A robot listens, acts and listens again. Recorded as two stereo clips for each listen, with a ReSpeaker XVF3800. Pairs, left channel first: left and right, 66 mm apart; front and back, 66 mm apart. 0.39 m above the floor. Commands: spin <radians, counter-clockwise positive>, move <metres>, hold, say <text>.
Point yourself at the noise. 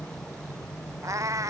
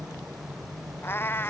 spin -0.96
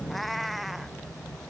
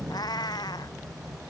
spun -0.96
say Facing the cat meowing.